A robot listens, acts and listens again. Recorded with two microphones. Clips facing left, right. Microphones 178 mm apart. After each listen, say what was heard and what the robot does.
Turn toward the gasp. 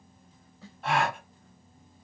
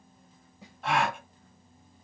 Turn 30° left.
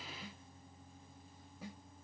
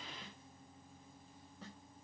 Keep listening.
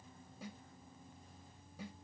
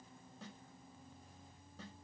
I heard a gasp, but can't make it out now. It was about 30° right or 150° left.